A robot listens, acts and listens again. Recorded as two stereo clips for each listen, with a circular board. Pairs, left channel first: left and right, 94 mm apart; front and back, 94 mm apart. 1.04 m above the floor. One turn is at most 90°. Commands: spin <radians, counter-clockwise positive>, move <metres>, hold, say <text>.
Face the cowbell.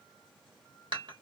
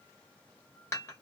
hold
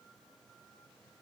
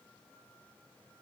hold
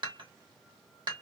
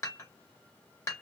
say I can't make out a cowbell to turn to.